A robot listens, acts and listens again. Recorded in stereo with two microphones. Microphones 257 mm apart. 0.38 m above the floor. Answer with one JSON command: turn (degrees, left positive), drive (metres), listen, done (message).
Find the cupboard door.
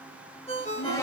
{"turn": 30}
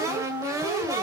{"turn": -15}
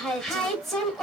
{"done": "Found it: a cupboard door, straight ahead."}